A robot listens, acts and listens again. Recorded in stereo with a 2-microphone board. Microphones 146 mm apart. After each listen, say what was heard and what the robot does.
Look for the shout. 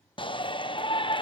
The shout: about 35° left or 145° left. Turn 35° left.
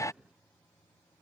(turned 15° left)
So it is at 20° left. Turn 20° left.
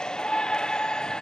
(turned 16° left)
Facing the shout.